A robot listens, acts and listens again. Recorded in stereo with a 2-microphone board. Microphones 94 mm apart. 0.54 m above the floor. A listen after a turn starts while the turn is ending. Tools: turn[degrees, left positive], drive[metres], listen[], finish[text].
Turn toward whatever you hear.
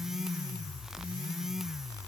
Action: listen[]
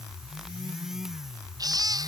Thought: The baby crying: about 40° right or 140° right.
Action: turn[-40]
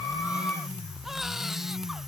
Action: listen[]
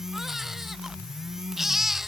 Action: finish[Facing the baby crying.]